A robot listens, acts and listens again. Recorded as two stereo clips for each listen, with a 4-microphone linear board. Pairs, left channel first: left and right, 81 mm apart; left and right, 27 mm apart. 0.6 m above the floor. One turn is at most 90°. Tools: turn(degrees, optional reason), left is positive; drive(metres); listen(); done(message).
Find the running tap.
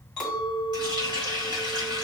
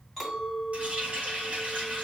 turn(degrees=-60, reason="The running tap: about 60° right or 120° right.")
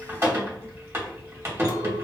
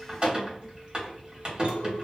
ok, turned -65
turn(degrees=-40, reason="So it is at 40° right.")
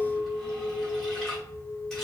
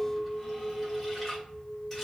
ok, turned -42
done("Facing the running tap, 1 to 2 m away.")